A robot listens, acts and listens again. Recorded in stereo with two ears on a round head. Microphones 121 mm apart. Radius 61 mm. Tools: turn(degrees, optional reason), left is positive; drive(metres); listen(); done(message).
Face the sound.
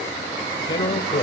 turn(degrees=35, reason="The man speaking: about 35° left or 145° left.")
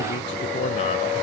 turn(degrees=105, reason="So it is at 105° left.")
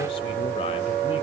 listen()
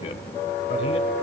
listen()
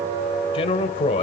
turn(degrees=55, reason="The man speaking is now 55° left.")
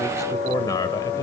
turn(degrees=30, reason="The man speaking is now 30° left.")
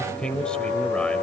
turn(degrees=10, reason="The man speaking is now 10° left.")
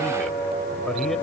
listen()
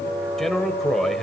done("Found it: a man speaking, straight ahead, 1 to 2 m away.")